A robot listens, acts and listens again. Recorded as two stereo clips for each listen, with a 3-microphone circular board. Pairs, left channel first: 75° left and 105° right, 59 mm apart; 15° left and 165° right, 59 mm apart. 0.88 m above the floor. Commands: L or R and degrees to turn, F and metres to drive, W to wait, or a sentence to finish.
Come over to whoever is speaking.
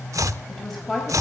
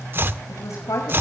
R10
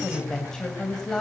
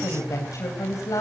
F1.0
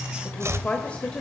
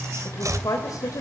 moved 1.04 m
F1.0
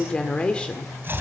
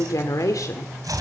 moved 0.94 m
F1.0
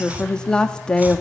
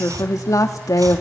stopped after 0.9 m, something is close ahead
I am next to the woman speaking.